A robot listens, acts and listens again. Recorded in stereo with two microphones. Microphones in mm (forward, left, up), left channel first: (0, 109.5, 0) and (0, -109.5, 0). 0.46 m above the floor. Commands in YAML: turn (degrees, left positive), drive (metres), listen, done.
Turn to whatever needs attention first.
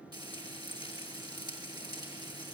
listen: true
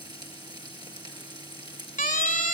turn: 35
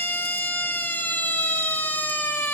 turn: 10
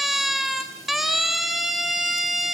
done: "Facing the siren."